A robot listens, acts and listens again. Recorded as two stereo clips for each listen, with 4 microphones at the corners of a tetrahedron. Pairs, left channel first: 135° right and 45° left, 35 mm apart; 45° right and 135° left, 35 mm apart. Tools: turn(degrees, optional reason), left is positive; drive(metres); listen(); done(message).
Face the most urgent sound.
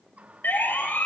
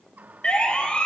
turn(degrees=-100, reason="The siren: 100° right.")
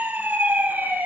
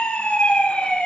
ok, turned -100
turn(degrees=15, reason="The siren is now 15° left.")
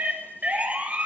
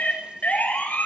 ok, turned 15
done("Found it: a siren, straight ahead.")